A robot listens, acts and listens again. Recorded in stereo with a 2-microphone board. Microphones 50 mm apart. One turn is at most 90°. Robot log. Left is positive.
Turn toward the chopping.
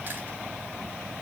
cmd idle
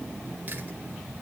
cmd idle
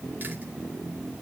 end: I can't make out chopping to turn to.